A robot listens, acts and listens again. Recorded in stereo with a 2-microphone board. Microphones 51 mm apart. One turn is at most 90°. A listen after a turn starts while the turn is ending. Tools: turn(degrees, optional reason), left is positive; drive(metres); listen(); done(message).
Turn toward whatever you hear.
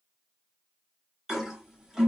turn(degrees=-30)
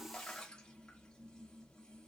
listen()
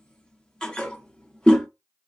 turn(degrees=20, reason="So it is at 20° left.")
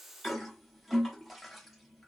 done("Facing the toilet flushing, under 1 m away.")